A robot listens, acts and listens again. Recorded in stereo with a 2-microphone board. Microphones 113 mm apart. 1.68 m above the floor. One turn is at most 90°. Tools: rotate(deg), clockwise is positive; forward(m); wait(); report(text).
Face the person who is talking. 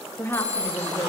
rotate(-20)
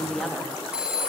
report("Found it: a woman speaking, straight ahead, 2 to 4 m away.")